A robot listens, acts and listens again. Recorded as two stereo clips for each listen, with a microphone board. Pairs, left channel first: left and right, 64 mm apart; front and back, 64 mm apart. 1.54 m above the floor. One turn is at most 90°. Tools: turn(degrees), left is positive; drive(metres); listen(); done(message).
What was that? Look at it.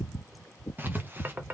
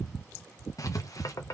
turn(degrees=-30)
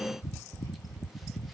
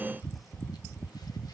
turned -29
listen()
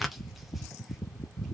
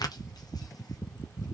done("Facing the writing.")